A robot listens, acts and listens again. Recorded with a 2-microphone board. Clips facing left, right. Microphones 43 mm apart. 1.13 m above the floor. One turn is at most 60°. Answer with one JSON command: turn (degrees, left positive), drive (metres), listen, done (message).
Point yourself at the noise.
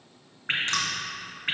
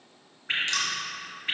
{"turn": 40}
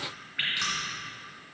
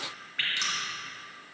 {"turn": 10}
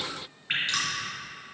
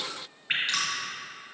{"done": "Found it: dripping, straight ahead, 2 to 4 m away."}